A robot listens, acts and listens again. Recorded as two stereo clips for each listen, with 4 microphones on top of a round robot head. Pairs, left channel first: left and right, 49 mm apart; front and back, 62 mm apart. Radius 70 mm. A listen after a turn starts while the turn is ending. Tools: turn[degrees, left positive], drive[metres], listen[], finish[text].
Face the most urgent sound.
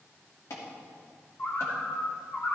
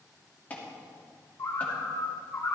Thought: The alarm: 65° left.
Action: turn[65]
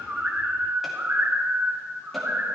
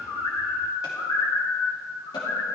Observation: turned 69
Action: listen[]
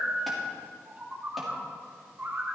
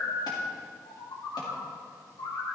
Action: listen[]
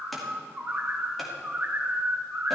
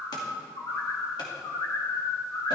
Action: finish[I heard an alarm from this way, but can't make it out now.]